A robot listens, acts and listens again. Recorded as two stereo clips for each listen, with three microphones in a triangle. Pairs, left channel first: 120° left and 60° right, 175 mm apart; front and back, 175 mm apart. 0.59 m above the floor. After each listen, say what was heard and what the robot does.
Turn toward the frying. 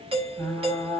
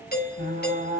The frying: 165° right. Turn 165° right.
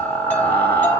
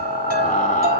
The frying is now 40° left. Turn 40° left.
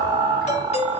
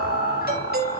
The frying is now 10° left. Turn 10° left.
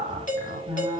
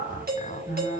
Found it: frying, straight ahead.